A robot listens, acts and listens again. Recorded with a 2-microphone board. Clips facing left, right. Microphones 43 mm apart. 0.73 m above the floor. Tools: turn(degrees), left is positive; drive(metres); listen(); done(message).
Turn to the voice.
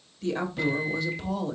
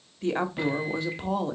turn(degrees=-30)
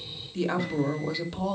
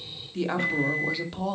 done("Found it: a woman speaking, straight ahead.")